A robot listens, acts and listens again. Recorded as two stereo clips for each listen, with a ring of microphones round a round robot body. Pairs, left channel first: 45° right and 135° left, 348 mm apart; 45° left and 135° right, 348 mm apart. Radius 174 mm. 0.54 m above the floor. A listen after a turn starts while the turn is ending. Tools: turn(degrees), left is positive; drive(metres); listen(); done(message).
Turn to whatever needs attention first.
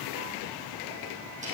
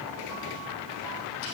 listen()
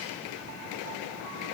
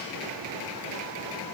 listen()
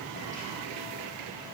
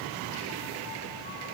done("I can't make out anything urgent to turn to.")